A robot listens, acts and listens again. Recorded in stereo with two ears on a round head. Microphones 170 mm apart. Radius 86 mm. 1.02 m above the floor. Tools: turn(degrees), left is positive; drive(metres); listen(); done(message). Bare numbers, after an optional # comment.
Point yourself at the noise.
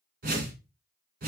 # The whoosh: about 50° right or 130° right.
turn(-50)
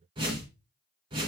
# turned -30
# So it is at 30° right.
turn(-30)
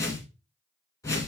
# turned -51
# The whoosh is now 20° left.
turn(20)
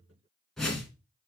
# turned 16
done("Found it: a whoosh, straight ahead.")